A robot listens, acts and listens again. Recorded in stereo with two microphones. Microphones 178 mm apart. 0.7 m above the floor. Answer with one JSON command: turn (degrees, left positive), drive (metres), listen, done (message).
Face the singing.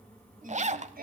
{"turn": -55}
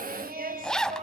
{"turn": -45}
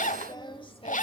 {"turn": 30}
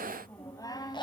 {"turn": 25}
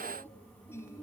{"turn": 15}
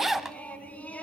{"turn": 10}
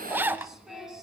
{"done": "Found it: singing, straight ahead, 2 to 4 m away."}